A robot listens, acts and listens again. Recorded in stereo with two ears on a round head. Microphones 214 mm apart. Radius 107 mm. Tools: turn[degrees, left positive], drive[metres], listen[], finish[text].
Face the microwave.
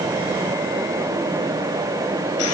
Action: listen[]
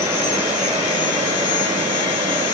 Action: listen[]
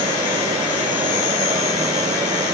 Action: finish[I can't make out a microwave, only sawing.]